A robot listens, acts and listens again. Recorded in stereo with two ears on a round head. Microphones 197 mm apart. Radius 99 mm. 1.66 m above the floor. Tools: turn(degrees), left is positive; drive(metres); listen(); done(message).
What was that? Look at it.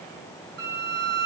turn(degrees=-70)
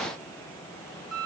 done("Found it: a violin, straight ahead, 1 to 2 m away.")